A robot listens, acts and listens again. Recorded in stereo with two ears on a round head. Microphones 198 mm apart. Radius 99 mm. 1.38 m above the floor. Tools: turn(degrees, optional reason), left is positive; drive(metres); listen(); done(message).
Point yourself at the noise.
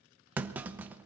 turn(degrees=-30)
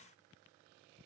listen()
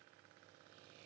done("I heard a clunk, but can't make it out now. It was about 25° left or 145° right.")